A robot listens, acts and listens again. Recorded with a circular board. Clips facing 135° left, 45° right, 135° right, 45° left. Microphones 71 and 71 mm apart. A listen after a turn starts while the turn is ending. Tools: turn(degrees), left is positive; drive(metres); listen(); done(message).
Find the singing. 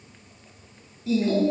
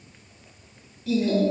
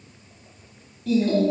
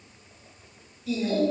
turn(degrees=-160)
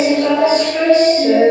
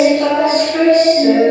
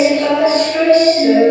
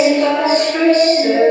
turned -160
done("Facing the singing.")